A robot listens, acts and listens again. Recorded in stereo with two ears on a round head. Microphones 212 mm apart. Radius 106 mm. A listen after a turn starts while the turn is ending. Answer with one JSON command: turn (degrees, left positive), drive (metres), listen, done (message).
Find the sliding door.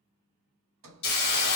{"turn": -60}
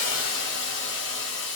{"listen": true}
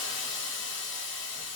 {"listen": true}
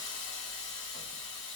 {"done": "I heard a sliding door, but can't make it out now. It was about straight ahead or 60° right."}